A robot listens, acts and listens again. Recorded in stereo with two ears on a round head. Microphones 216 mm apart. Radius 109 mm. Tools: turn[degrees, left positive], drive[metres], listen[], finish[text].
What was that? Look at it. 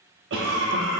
Thought: The cough: about 55° right or 125° right.
Action: turn[-55]
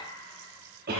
Thought: So it is at 50° right.
Action: turn[-50]
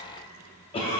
Thought: The cough is now 30° left.
Action: turn[30]
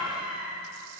Action: finish[Found it: a cough, straight ahead, under 1 m away.]